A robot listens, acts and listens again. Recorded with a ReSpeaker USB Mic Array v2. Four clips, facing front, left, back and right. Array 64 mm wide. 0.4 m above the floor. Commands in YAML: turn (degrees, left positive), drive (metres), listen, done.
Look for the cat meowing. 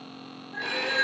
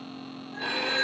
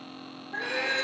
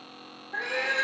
turn: -115
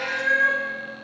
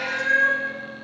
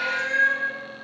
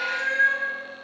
turn: 30
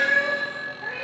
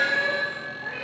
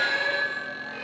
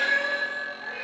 done: "Found it: a cat meowing, straight ahead."